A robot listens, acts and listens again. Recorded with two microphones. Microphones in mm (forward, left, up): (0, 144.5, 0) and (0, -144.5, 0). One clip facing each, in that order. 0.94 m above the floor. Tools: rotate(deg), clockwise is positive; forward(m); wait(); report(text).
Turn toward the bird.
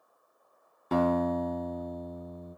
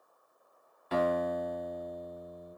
wait()
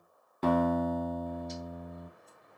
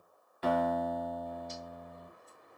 rotate(-30)
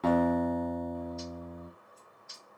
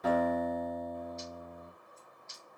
rotate(-140)
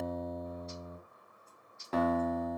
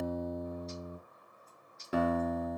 rotate(-35)
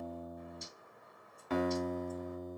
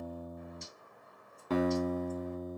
report("Facing the bird, 2 to 4 m away.")